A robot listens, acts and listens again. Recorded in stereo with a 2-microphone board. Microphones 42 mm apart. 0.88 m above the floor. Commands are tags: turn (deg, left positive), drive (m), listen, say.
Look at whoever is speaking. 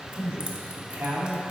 <turn deg="-90"/>
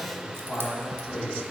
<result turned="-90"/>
<turn deg="30"/>
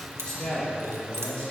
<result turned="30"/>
<turn deg="25"/>
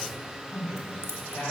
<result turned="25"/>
<turn deg="30"/>
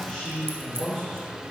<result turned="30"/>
<say>Found it: a man speaking, straight ahead.</say>